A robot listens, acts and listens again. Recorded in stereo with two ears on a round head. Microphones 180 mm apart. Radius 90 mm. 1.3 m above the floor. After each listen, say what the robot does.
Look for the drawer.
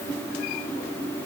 Keep listening.
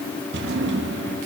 Turn 60° right.
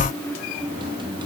Keep listening.
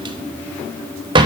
Turn 25° right.
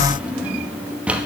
Facing the drawer, under 1 m away.